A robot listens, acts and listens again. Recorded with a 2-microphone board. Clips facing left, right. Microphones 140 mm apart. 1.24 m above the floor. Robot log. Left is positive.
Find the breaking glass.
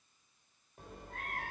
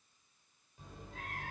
cmd idle
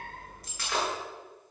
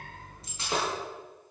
note: The breaking glass: about 25° right or 155° right.
cmd yaw -25
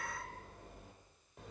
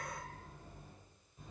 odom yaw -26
cmd idle
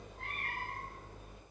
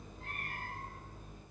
end: I heard breaking glass, but can't make it out now. It was about straight ahead or 130° right.